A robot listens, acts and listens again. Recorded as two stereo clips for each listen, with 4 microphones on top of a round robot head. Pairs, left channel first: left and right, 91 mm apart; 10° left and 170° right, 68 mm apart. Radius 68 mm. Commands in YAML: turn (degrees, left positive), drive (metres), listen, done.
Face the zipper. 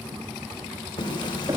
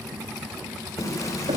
turn: 50
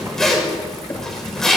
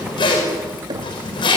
done: "Found it: a zipper, straight ahead, over 4 m away."